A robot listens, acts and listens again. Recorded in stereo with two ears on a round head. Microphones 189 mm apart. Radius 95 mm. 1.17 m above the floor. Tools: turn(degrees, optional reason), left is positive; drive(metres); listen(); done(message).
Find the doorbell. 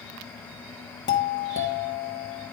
turn(degrees=55, reason="The doorbell: about 55° left or 125° left.")
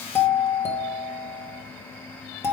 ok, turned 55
turn(degrees=15, reason="So it is at 15° left.")
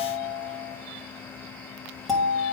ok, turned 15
done("Facing the doorbell, 1 to 2 m away.")